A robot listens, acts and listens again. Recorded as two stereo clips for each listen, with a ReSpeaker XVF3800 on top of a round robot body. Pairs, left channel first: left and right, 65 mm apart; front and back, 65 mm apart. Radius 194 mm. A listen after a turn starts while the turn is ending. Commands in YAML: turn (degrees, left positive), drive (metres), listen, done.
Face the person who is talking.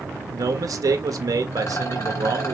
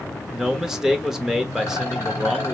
turn: -95
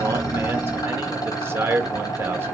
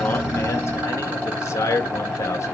turn: -40
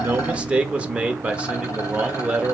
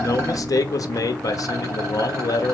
turn: -20
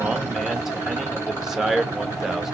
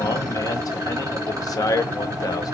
done: "Found it: a man speaking, straight ahead, 1 to 2 m away."